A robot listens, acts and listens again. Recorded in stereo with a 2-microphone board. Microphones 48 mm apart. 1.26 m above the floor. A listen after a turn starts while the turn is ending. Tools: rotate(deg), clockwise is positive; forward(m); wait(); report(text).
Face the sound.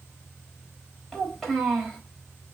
rotate(-30)
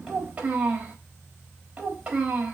rotate(30)
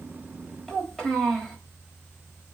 report("Facing the child speaking.")